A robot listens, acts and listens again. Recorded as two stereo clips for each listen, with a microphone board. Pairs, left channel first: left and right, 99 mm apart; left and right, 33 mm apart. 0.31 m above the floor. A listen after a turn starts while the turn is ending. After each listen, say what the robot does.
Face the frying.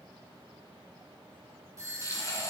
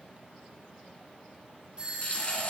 Turn 35° left.
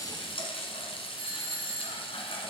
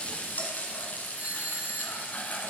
Turn 110° left.
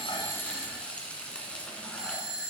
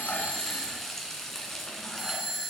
Turn 15° left.
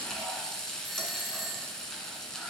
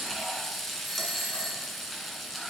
Found it: frying, straight ahead, 1 to 2 m away.